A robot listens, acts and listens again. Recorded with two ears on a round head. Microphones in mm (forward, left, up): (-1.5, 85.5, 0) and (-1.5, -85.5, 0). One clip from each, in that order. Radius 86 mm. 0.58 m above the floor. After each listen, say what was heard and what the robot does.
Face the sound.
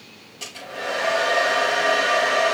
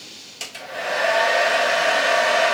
The hair dryer: about 60° right or 120° right. Turn 60° right.
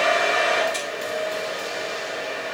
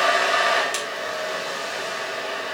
So it is at 60° right. Turn 60° right.
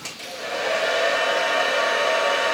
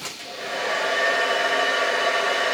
Facing the hair dryer.